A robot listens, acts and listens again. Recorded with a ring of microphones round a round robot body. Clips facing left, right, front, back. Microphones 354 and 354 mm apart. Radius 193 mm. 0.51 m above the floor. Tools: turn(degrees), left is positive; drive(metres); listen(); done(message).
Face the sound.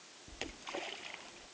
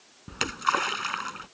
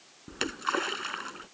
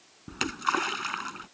turn(degrees=-115)
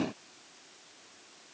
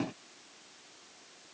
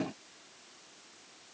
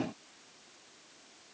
done("I heard a splash from this way, but can't make it out now.")